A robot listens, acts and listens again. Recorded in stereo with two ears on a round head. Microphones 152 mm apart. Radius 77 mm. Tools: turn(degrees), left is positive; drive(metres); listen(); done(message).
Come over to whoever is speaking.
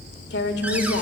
turn(degrees=70)
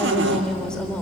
drive(metres=1.0)
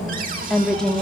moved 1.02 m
drive(metres=1.0)
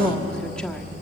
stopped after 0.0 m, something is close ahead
done("I am next to the woman speaking.")